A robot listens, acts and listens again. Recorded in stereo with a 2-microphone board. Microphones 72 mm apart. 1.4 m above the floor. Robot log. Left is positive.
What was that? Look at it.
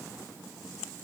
cmd idle
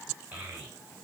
note: The child speaking: about 25° right or 155° right.
cmd yaw -25
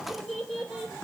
end: Found it: a child speaking, straight ahead.